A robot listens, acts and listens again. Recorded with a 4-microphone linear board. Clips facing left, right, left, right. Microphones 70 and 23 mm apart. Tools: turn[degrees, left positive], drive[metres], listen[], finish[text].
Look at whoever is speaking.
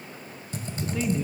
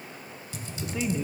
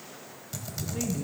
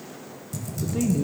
Action: turn[-30]
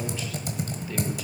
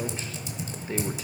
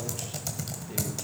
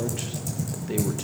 Thought: So it is at 140° right.
Action: turn[-140]
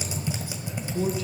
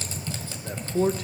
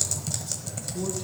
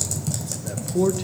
Thought: The man speaking is now 60° right.
Action: turn[-60]
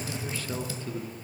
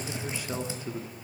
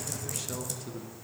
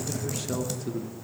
Thought: The man speaking is now 15° right.
Action: turn[-15]
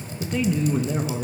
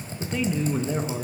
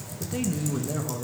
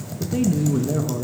Action: finish[Found it: a man speaking, straight ahead, under 1 m away.]